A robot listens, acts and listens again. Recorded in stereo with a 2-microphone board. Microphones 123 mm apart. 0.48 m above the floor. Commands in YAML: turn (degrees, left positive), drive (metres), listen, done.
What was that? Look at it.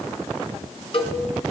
turn: 45
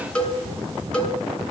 done: "Found it: a cowbell, straight ahead."